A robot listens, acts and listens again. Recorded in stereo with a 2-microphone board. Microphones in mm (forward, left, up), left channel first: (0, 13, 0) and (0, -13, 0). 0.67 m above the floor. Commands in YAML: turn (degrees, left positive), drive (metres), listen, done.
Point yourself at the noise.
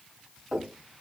turn: -25
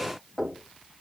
done: "Found it: knocking, straight ahead."